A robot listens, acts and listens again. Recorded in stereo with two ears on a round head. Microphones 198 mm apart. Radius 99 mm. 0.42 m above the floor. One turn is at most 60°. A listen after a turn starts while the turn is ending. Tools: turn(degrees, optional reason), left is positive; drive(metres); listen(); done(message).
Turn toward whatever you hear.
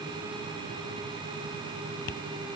turn(degrees=55, reason="The tapping: about 55° left or 125° left.")
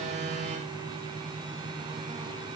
listen()
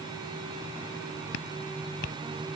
turn(degrees=60, reason="So it is at 65° left.")
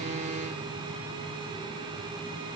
listen()
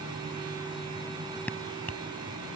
turn(degrees=10, reason="The tapping is now 10° left.")
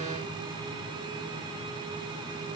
listen()
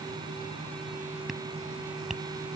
done("Facing the tapping.")